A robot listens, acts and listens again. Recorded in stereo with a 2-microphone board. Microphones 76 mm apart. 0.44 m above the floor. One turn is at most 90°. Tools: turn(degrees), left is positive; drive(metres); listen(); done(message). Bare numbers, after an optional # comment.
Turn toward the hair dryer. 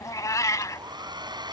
# The hair dryer: about 75° right or 105° right.
turn(-75)
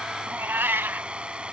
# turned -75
# So it is at 15° right.
turn(-15)
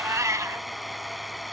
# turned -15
done("Found it: a hair dryer, straight ahead.")